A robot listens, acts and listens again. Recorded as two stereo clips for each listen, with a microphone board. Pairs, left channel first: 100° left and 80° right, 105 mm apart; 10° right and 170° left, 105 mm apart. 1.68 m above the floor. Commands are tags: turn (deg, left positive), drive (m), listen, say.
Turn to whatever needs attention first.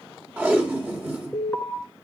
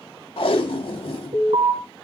<turn deg="180"/>
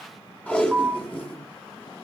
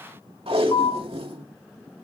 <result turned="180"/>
<say>Facing the alarm, 2 to 4 m away.</say>